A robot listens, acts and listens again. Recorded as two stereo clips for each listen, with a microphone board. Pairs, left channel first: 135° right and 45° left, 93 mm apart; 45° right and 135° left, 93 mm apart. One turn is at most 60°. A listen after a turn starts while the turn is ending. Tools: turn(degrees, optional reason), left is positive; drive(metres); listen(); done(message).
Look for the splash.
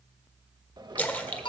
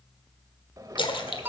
turn(degrees=-60, reason="The splash: 60° right.")
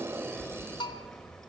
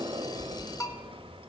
done("Facing where the splash came from. I can't hear it now.")